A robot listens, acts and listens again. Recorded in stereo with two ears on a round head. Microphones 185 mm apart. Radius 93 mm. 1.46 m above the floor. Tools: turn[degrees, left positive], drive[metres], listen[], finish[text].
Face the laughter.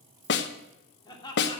Thought: The laughter: about 20° left or 160° left.
Action: turn[20]
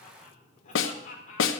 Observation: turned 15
Thought: The laughter: about 40° left or 140° left.
Action: turn[40]
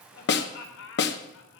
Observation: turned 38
Thought: So it is at 100° left.
Action: turn[100]
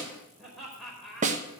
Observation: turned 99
Action: finish[Found it: laughter, straight ahead.]